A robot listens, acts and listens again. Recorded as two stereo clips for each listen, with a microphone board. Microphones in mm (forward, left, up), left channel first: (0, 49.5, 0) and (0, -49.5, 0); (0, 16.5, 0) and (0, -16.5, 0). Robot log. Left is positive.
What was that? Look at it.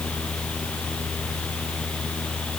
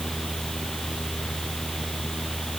cmd idle
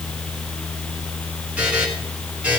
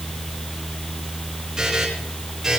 cmd yaw -30
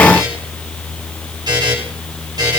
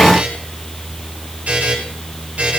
note: So it is at 135° right.
cmd yaw -135
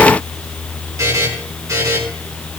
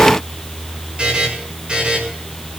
note: The buzzer is now 35° right.
cmd yaw -35
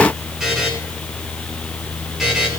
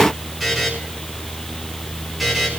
end: Found it: a buzzer, straight ahead.